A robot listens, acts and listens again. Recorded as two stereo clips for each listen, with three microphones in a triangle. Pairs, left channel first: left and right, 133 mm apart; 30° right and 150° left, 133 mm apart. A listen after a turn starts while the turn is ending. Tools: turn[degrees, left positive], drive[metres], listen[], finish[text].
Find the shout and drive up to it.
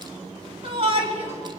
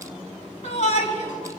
Thought: The shout: 50° right.
Action: turn[-50]
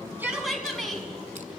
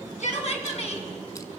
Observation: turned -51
Action: drive[1.0]
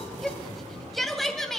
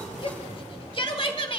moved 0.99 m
Action: drive[1.0]
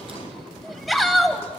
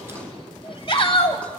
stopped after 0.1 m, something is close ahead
Action: finish[Arrived at the shout, straight ahead.]